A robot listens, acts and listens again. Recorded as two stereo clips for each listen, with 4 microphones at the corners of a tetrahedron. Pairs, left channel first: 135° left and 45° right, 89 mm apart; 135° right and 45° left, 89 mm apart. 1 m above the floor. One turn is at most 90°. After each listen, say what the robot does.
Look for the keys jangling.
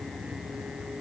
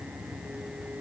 Keep listening.
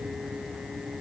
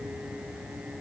Keep listening.
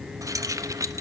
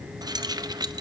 Found it: keys jangling, straight ahead, under 1 m away.